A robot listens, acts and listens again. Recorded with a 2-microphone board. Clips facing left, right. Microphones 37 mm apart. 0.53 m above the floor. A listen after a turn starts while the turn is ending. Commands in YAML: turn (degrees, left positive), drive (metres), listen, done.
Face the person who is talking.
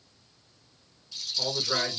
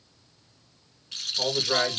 turn: -30
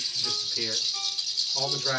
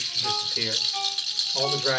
turn: -140
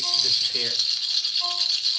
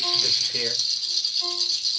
listen: true
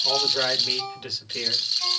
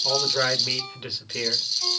turn: -20
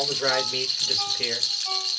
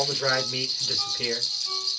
turn: 10
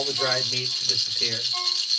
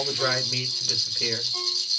done: "Found it: a man speaking, straight ahead."